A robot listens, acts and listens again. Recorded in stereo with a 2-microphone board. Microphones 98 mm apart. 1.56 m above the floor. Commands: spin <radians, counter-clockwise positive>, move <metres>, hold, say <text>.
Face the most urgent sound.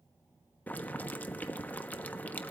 hold
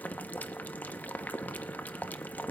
hold
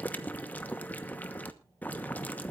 say I can't make out anything urgent to turn to.